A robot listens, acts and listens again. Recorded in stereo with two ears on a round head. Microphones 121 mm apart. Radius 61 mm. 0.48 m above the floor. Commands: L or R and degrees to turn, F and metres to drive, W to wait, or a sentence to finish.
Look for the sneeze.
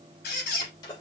L30
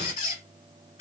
W
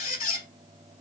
I heard a sneeze, but can't make it out now. It was about straight ahead or 120° left.